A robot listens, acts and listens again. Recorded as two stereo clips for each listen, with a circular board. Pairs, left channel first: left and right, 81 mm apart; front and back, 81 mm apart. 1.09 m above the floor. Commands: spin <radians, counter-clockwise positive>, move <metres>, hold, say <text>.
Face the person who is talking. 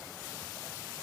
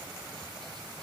hold
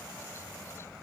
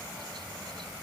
hold
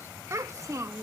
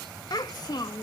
spin -0.70
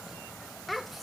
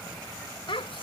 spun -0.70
say Found it: a child speaking, straight ahead.